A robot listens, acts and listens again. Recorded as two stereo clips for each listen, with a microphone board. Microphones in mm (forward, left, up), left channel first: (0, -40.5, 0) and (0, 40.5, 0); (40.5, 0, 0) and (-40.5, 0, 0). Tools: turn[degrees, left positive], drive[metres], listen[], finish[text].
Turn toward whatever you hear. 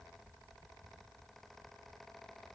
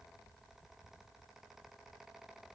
Action: listen[]
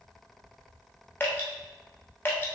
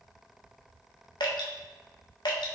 Thought: The dripping: 25° right.
Action: turn[-25]
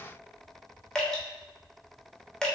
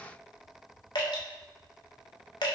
Thought: The dripping is now 10° right.
Action: turn[-10]
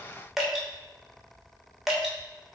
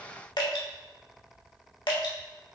Action: finish[Found it: dripping, straight ahead, 1 to 2 m away.]